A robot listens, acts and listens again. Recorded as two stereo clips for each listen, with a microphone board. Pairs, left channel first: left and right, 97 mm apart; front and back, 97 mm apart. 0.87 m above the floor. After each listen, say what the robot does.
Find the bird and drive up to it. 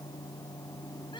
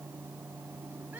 Keep listening.
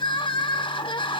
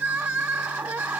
Keep listening.
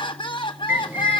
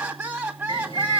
Turn 25° right.
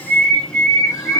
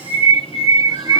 Turn 10° left.
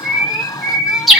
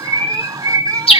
Drive 1.0 m forward.
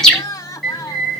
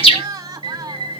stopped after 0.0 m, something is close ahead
Blocked. The bird is further on, straight ahead.